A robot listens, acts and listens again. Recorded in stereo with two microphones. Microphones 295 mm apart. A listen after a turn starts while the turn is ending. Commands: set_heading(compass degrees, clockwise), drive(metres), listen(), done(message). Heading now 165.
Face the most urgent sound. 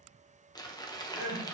set_heading(235)
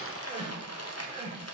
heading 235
set_heading(255)
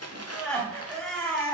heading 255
done("Facing the crying.")